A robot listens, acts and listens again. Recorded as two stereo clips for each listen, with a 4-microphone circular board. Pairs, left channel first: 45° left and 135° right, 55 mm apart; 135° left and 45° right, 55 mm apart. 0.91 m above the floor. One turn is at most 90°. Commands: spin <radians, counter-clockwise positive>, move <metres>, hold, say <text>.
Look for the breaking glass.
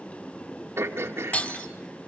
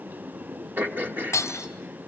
spin 1.57
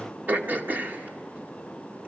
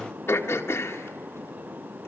spin 0.26
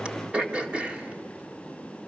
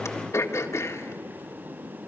say Facing where the breaking glass came from. I can't hear it now.